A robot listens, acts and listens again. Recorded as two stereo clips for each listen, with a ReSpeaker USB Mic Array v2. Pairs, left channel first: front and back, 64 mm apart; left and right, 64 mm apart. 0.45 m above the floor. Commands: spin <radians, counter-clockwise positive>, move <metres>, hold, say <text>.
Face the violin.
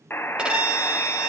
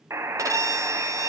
spin -1.92
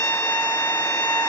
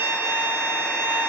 spin -0.79
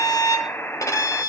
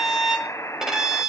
say Facing the violin, 1 to 2 m away.